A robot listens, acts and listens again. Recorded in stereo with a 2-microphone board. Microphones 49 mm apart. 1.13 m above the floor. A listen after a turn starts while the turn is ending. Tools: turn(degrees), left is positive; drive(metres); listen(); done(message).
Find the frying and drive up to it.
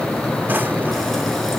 listen()
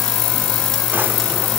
listen()
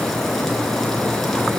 done("I can't make out frying to turn to.")